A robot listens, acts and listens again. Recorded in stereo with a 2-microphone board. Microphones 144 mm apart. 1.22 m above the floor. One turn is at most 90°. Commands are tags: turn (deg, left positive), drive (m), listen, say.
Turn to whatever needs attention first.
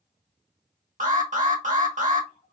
<turn deg="-60"/>
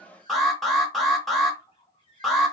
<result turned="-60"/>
<say>Found it: an alarm, straight ahead.</say>